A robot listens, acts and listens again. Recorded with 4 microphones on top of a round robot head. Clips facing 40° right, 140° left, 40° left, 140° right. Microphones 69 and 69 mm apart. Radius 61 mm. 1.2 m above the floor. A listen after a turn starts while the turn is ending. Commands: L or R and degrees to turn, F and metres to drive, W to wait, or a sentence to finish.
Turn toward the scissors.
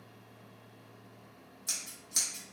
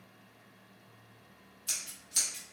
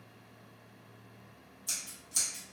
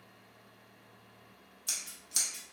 R105
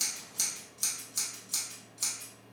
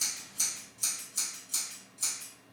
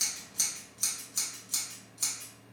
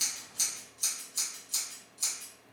Facing the scissors.